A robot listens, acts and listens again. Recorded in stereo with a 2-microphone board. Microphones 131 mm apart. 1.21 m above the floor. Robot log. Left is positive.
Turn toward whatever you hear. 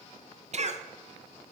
note: The cough: about 60° right or 120° right.
cmd yaw -60
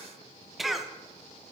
end: Facing the cough, under 1 m away.